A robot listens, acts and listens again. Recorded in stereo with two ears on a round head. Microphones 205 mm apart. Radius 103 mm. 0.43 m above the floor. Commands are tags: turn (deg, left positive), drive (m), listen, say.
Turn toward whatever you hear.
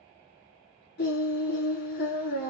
<turn deg="50"/>
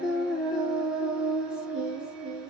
<say>Found it: singing, straight ahead.</say>